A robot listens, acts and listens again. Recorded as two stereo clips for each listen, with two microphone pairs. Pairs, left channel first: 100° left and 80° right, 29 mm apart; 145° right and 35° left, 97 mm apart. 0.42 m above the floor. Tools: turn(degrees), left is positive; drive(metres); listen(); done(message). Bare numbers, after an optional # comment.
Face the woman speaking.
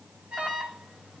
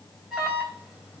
listen()
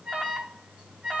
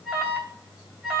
listen()
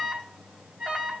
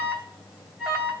done("I can't make out a woman speaking to turn to.")